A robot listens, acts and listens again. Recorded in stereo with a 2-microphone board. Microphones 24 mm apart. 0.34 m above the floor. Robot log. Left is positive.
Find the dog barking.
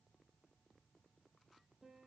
cmd idle
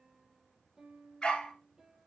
note: The dog barking: about 30° left or 150° left.
cmd yaw +30
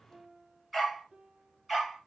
note: So it is at 10° right.
cmd yaw -10
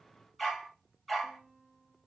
end: Found it: a dog barking, straight ahead.